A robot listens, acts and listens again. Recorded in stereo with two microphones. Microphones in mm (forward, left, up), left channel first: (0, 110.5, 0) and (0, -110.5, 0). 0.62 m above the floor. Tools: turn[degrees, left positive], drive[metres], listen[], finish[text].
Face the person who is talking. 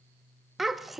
Action: turn[30]
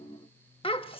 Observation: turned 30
Thought: So it is at 155° left.
Action: turn[155]
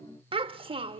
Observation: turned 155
Thought: The child speaking is now 25° right.
Action: turn[-25]
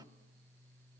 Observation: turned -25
Action: listen[]
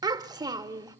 Thought: The child speaking is now 20° right.
Action: turn[-20]
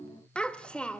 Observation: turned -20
Action: finish[Facing the child speaking.]